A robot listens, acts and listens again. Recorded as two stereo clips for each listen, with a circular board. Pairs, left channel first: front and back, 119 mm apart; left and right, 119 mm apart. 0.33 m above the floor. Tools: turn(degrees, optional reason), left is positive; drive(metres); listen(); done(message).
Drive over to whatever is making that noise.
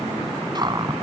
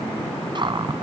turn(degrees=-130, reason="The cupboard door: 130° right.")
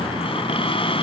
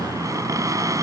turn(degrees=-30, reason="The cupboard door is now 30° right.")
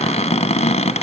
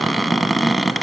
drive(metres=1.0)
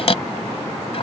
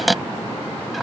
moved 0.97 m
drive(metres=1.0)
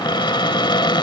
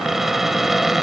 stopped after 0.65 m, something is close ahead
done("Arrived at the cupboard door, straight ahead.")